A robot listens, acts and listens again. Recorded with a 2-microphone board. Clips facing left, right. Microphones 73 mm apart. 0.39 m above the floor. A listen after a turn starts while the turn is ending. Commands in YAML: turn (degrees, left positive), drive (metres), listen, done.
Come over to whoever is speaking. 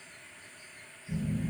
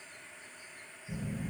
listen: true
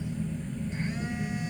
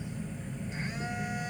listen: true
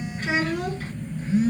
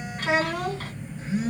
turn: -70
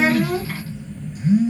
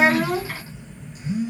listen: true
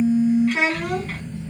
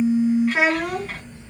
turn: -10
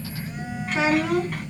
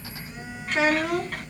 drive: 1.0
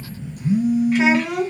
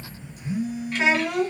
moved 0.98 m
turn: 15
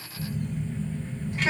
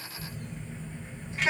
listen: true
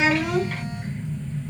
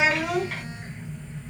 drive: 1.0
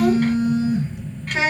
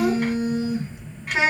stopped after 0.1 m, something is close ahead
done: "I am next to the child speaking."